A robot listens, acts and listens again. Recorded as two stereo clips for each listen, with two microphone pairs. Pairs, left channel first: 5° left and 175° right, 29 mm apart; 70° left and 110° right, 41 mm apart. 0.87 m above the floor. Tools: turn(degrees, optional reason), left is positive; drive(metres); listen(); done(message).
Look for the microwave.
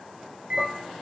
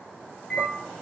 turn(degrees=140, reason="The microwave: 140° left.")
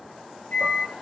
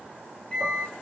done("Found it: a microwave, straight ahead, over 4 m away.")